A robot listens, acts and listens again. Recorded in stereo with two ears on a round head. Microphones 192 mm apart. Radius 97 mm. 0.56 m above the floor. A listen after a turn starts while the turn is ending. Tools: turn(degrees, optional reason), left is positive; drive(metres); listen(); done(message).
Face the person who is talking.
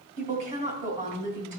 turn(degrees=-35, reason="The woman speaking: about 35° right or 145° right.")
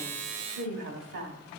turn(degrees=-105, reason="So it is at 105° right.")
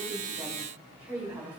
turn(degrees=-10, reason="The woman speaking is now 10° right.")
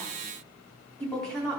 done("Found it: a woman speaking, straight ahead.")